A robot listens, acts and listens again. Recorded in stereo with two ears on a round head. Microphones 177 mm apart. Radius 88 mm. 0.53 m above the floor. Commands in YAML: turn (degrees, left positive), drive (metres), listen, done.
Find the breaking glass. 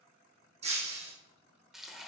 turn: -35
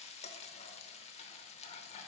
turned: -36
listen: true
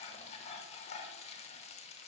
done: "I heard breaking glass, but can't make it out now. It was about straight ahead or 110° right."